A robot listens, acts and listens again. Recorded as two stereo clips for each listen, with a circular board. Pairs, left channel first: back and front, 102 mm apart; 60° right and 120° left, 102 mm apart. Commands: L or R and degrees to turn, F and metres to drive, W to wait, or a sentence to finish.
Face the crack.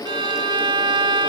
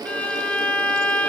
W
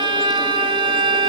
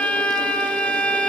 W
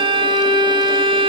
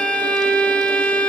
I can't make out a crack to turn to.